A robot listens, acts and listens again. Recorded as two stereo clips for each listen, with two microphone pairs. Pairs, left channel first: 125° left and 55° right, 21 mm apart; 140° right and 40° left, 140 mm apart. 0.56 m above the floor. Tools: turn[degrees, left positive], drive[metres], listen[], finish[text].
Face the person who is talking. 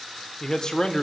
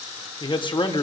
Thought: The man speaking: 175° left.
Action: turn[175]
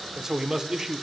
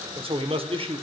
Action: finish[Found it: a man speaking, straight ahead, 1 to 2 m away.]